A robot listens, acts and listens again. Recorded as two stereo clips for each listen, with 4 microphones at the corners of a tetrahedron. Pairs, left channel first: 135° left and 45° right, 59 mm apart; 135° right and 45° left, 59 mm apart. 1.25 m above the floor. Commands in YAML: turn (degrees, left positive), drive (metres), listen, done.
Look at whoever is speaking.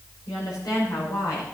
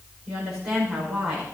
turn: 120
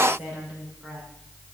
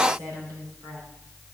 turn: 35
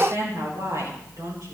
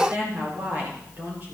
turn: -15
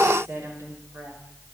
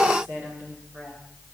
done: "Facing the woman speaking, over 4 m away."